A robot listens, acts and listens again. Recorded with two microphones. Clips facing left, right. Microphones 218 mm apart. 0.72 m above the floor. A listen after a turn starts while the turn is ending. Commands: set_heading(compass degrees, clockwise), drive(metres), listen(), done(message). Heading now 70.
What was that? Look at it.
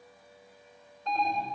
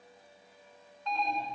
set_heading(25)
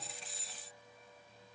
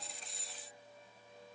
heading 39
listen()
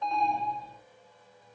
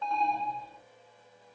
set_heading(24)
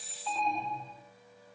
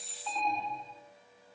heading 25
done("Facing the alarm.")